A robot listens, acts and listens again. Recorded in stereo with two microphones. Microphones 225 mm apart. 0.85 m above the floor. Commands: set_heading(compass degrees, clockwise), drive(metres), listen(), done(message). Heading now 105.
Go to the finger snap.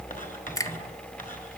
set_heading(75)
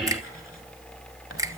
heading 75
listen()
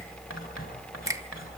listen()
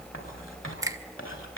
set_heading(90)
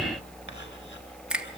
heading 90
drive(1.0)
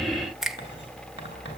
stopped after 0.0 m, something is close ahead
done("Something is in my way. I am facing the finger snap but have not reached it.")